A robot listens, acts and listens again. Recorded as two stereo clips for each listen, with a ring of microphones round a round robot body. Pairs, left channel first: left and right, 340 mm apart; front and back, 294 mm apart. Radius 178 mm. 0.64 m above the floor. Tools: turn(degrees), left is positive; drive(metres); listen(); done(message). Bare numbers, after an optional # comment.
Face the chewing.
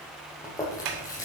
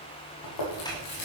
# The chewing: 10° left.
turn(10)
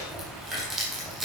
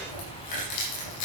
done("Facing the chewing.")